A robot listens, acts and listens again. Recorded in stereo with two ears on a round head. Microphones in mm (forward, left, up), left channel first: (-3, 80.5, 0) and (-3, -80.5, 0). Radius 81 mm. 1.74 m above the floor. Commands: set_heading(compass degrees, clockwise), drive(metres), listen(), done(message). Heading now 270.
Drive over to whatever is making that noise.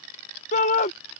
set_heading(230)
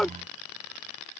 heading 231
drive(1.0)
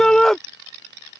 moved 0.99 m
drive(1.0)
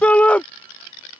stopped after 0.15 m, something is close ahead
done("I am next to the shout.")